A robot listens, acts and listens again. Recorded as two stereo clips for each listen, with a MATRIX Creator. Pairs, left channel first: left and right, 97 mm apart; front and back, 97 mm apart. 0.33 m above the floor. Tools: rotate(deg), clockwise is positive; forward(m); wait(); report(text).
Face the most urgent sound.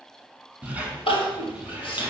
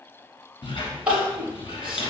rotate(-100)
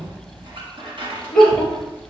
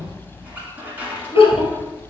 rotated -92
rotate(-10)
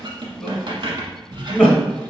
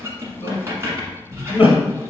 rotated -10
report("Facing the crying.")